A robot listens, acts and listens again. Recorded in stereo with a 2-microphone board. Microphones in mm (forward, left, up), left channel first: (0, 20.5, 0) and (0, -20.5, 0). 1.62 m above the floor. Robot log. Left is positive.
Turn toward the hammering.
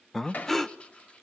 note: The hammering: about 45° left or 135° left.
cmd yaw +45
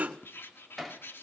end: Found it: hammering, straight ahead.